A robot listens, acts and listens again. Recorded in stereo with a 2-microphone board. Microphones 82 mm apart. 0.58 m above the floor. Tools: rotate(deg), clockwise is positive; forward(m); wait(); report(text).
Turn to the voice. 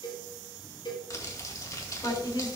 rotate(-60)
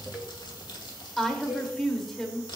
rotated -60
report("Found it: a woman speaking, straight ahead.")